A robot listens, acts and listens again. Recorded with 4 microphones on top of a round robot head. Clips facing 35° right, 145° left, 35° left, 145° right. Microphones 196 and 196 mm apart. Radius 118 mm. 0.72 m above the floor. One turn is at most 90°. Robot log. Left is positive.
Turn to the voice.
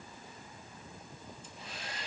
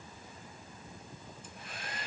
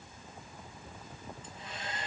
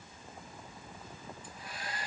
cmd idle
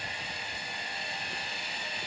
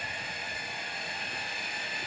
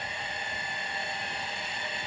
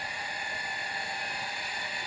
cmd idle
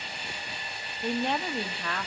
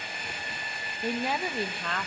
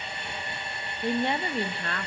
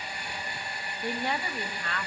note: The woman speaking: 45° left.
cmd yaw +45
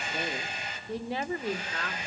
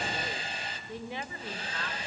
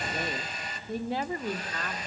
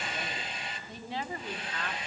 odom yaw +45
end: Found it: a woman speaking, straight ahead, 1 to 2 m away.